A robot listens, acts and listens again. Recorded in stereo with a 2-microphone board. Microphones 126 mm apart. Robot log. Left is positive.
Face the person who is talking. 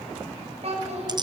note: The child speaking: about 60° right or 120° right.
cmd yaw -60
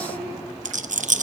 cmd idle
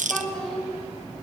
end: Found it: a child speaking, straight ahead, over 4 m away.